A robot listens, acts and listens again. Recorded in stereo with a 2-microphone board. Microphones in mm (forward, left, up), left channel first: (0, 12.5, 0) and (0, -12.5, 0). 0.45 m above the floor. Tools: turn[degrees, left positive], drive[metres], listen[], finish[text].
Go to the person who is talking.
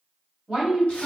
Thought: The woman speaking: about 20° right or 160° right.
Action: turn[-20]
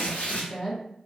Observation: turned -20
Action: drive[1.0]
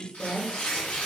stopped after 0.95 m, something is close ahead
Action: finish[I am next to the woman speaking.]